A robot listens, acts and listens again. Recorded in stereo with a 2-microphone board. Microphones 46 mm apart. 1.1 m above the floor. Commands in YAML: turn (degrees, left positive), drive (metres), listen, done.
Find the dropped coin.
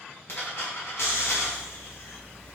turn: 55
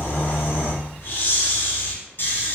listen: true
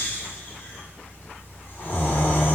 done: "I heard a dropped coin, but can't make it out now. It was about straight ahead or 70° left."